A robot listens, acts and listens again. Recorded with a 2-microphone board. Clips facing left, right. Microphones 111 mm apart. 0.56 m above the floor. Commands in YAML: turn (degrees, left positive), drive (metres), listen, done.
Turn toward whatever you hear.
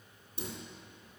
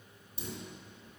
turn: 55
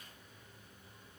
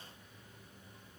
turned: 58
listen: true
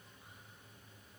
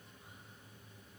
done: "I heard a dropped coin, but can't make it out now. It was about 5° right or 70° left."